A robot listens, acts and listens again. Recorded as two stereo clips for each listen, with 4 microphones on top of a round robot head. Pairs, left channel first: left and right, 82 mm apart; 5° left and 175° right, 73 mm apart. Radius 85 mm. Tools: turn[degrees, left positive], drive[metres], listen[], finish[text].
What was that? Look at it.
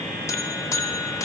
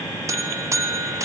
Thought: The buzzer: 140° left.
Action: turn[140]
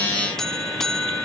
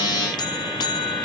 Action: finish[Facing the buzzer.]